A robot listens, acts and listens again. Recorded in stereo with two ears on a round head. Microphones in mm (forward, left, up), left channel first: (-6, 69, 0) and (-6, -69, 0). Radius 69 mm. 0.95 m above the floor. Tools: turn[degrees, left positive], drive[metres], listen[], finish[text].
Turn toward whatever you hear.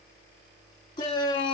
Thought: The shout: about 25° left or 155° left.
Action: turn[25]
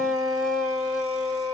Action: finish[Facing the shout, 1 to 2 m away.]